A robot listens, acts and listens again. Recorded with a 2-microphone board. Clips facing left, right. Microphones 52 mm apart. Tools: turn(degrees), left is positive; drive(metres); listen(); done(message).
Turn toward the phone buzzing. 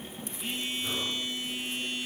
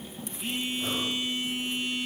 turn(degrees=-30)
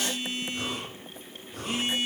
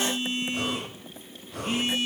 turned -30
turn(degrees=-145)
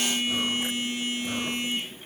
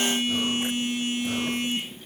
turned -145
turn(degrees=-55)
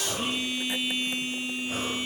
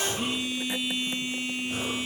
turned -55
turn(degrees=-15)
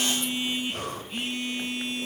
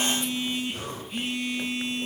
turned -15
done("Facing the phone buzzing.")